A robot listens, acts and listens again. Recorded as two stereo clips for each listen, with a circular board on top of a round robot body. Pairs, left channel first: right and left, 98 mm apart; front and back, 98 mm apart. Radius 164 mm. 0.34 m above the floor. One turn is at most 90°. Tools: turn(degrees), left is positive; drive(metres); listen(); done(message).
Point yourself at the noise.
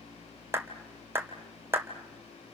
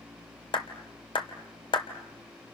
turn(degrees=25)
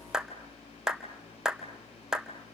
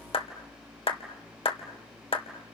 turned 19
done("Found it: a clap, straight ahead, 2 to 4 m away.")